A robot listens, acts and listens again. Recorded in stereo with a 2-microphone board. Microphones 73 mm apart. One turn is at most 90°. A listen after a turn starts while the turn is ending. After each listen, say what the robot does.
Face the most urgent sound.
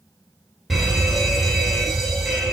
Turn 30° left.
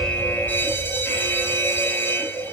Turn 90° left.
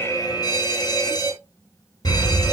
Turn 80° left.
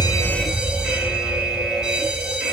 Turn 15° right.
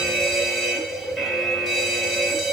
Found it: a fire alarm, straight ahead, over 4 m away.